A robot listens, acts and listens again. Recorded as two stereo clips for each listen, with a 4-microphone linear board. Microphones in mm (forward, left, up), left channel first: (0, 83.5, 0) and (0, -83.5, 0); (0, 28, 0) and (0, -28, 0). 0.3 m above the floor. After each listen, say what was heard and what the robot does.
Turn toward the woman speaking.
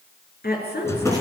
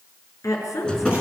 The woman speaking: about 75° left or 105° left. Turn 75° left.
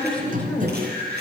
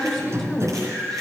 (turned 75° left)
So it is at 10° left. Turn 10° left.
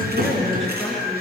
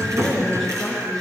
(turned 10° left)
Facing the woman speaking.